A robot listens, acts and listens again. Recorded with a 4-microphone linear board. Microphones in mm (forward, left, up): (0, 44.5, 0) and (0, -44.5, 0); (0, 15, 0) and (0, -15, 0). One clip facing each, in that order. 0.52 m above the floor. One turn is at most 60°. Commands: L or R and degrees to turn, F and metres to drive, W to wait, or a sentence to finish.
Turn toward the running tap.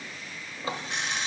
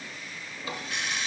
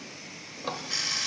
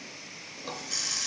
L30
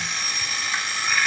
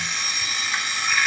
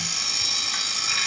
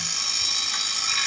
W
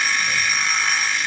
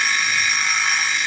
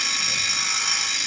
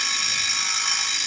W
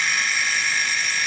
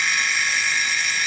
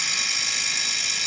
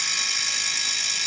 I heard a running tap, but can't make it out now. It was about straight ahead or 120° left.